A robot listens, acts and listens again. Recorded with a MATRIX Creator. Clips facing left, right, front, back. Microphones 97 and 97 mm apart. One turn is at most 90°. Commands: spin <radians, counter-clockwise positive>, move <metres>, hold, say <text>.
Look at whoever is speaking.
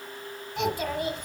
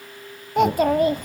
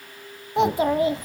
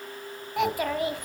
spin -1.05
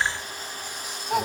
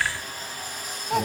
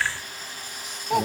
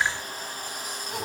say Found it: a child speaking, straight ahead.